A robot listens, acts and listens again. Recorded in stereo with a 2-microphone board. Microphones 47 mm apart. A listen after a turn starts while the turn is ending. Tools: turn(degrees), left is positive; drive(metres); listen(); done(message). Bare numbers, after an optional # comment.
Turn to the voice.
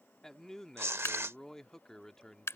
turn(30)
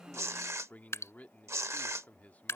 # So it is at 140° left.
turn(140)
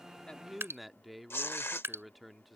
done("Found it: a man speaking, straight ahead.")